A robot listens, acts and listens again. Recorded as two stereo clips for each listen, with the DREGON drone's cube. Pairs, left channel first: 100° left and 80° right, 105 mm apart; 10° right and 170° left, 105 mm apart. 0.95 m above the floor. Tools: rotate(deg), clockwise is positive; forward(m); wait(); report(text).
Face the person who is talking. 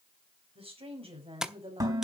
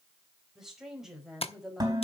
rotate(105)
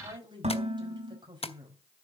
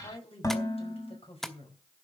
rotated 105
rotate(35)
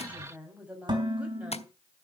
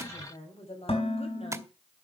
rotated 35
report("Facing the woman speaking, over 4 m away.")